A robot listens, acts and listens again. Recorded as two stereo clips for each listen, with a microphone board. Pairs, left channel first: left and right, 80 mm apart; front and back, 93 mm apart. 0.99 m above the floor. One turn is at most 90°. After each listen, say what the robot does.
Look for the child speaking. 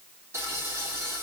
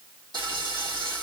Keep listening.
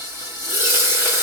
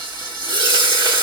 Keep listening.
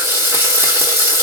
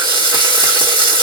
I can't make out a child speaking to turn to.